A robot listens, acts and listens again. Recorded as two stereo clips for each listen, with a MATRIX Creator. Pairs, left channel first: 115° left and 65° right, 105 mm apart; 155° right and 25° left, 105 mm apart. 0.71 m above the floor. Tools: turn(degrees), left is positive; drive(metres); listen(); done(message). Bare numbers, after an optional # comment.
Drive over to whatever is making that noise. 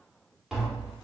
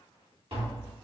# The tapping: 20° left.
turn(20)
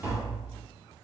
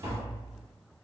drive(1.0)
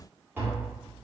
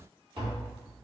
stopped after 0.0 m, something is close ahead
done("Something is in my way. I am facing the tapping but have not reached it.")